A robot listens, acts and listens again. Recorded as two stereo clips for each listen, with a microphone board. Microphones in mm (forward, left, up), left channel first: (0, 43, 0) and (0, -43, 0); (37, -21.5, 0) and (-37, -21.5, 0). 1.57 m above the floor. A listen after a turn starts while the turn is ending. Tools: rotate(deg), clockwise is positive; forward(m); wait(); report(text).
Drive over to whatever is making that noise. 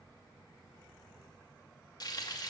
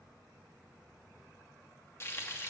rotate(-55)
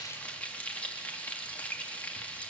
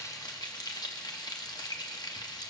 rotate(-15)
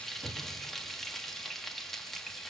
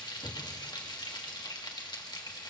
forward(1.0)
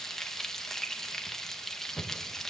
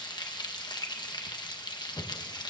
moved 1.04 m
forward(1.0)
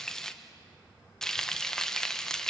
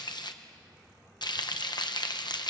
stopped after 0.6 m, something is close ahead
report("Arrived at the frying, straight ahead.")